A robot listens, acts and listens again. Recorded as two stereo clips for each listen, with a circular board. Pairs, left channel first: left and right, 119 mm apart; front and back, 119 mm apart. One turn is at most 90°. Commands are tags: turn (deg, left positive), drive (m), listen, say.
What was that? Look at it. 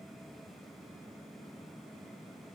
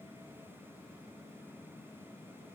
<listen/>
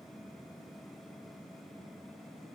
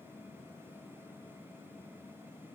<listen/>
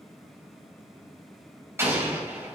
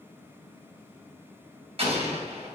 <turn deg="-90"/>
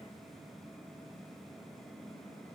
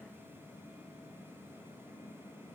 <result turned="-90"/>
<turn deg="-65"/>
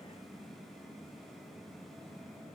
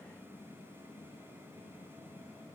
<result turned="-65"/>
<say>Facing where the explosion came from. I can't hear it now.</say>